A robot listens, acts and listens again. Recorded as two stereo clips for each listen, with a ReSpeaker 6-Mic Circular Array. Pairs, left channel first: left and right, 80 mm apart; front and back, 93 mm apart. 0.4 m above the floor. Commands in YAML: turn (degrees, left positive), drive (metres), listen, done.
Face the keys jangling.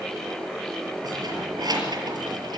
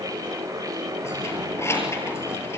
turn: -60
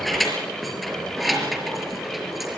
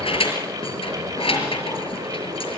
done: "Facing the keys jangling, over 4 m away."